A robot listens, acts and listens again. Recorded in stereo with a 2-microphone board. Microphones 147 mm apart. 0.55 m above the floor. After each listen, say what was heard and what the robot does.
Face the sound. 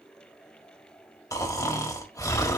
The snoring: about 25° left or 155° left. Turn 25° left.
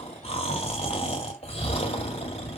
So it is at 130° left. Turn 130° left.
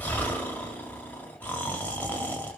The snoring is now 10° left. Turn 10° left.
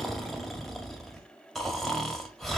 Found it: snoring, straight ahead, 1 to 2 m away.